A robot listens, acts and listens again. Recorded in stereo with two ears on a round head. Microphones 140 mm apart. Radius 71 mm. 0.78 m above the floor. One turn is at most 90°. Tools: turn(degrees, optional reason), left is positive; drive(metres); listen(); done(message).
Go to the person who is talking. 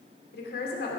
turn(degrees=65, reason="The woman speaking: about 65° left or 115° left.")
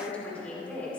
turn(degrees=10, reason="So it is at 10° left.")
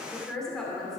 drive(metres=1.0)
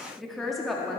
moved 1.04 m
drive(metres=1.0)
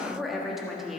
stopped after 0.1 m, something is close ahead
done("Arrived at the woman speaking, straight ahead.")